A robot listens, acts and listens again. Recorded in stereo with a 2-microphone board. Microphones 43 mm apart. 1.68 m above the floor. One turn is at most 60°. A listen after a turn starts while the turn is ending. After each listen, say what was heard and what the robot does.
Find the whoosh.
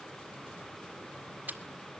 Keep listening.
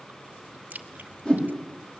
The whoosh: about 20° left or 160° left. Turn 20° left.
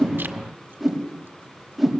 Found it: a whoosh, straight ahead, over 4 m away.